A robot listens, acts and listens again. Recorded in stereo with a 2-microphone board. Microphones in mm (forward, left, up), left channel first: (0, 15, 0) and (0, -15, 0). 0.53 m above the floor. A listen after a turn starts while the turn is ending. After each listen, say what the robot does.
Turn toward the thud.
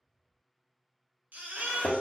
Turn 60° left.
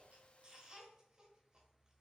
Keep listening.
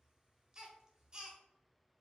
I heard a thud, but can't make it out now. It was about straight ahead or 60° left.